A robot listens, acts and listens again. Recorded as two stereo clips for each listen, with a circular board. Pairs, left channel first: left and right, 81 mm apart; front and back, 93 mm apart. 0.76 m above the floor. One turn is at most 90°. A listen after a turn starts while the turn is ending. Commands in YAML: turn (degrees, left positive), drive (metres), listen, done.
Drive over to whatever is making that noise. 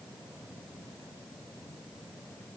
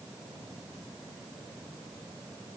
listen: true
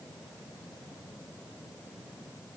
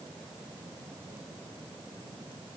listen: true
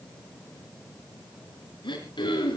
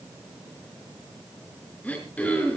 turn: 75
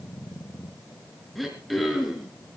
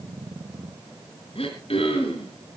drive: 1.0
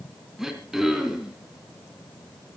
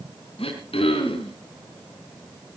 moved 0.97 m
drive: 1.0
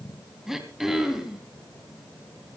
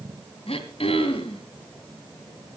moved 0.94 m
drive: 1.0
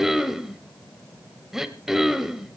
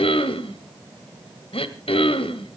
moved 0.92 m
drive: 1.0
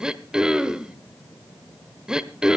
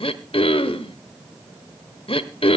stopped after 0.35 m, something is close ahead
turn: -10
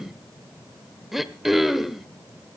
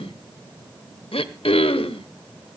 done: "I am next to the throat clearing."